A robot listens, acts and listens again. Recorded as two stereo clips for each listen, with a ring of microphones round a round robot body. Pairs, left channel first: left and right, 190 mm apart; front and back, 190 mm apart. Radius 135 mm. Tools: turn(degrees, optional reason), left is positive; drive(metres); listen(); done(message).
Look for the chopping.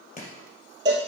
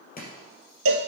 turn(degrees=40, reason="The chopping: 40° left.")
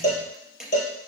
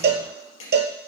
done("Found it: chopping, straight ahead, 2 to 4 m away.")